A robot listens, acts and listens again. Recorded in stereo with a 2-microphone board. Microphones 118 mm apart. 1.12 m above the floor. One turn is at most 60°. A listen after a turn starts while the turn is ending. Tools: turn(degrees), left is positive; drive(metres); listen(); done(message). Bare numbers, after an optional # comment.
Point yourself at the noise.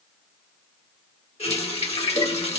# The running tap: about 70° left or 110° left.
turn(60)
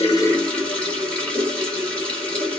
# So it is at 10° left.
turn(10)
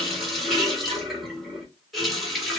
done("Found it: a running tap, straight ahead, 1 to 2 m away.")